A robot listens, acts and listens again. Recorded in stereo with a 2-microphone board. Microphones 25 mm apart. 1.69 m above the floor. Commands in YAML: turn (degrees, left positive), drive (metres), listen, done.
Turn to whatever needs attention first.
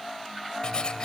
listen: true
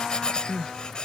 turn: 25
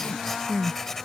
turn: 130
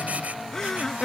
turn: 30
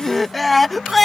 turn: 10
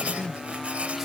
done: "Facing the crying."